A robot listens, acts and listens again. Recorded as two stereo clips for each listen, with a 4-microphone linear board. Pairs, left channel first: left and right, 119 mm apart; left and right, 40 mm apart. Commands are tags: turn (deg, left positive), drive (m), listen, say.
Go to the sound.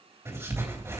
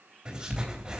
<turn deg="-25"/>
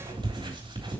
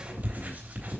<turn deg="-130"/>
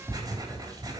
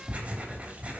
<turn deg="-35"/>
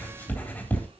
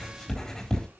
<turn deg="15"/>
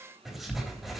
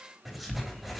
<drive m="1.0"/>
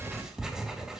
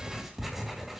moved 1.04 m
<drive m="1.0"/>
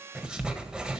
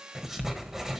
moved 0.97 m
<drive m="1.0"/>
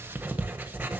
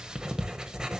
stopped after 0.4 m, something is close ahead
<turn deg="-15"/>
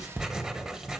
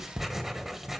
<say>I am next to the writing.</say>